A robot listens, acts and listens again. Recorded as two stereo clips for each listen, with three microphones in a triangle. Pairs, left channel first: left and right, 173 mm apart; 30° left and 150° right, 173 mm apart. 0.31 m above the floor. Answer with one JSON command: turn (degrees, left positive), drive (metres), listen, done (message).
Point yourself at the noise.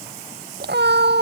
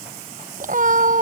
{"turn": -105}
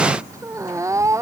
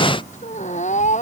{"turn": -15}
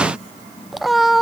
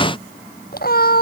{"done": "Facing the cat meowing."}